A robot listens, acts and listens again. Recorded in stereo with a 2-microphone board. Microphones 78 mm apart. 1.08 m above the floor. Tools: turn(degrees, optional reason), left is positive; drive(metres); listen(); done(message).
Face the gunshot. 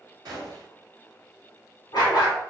turn(degrees=-60, reason="The gunshot: about 60° right or 120° right.")
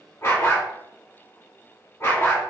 listen()
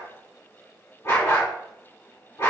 done("I heard a gunshot, but can't make it out now. It was about straight ahead or 60° right.")